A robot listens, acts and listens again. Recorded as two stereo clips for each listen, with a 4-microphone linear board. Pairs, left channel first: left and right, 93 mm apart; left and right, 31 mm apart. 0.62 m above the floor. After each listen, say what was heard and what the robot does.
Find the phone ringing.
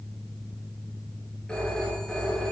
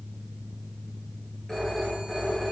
Turn 30° left.
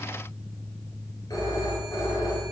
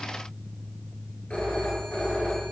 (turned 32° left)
So it is at 135° left. Turn 135° left.
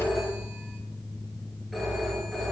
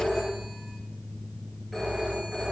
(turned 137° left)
Found it: a phone ringing, straight ahead.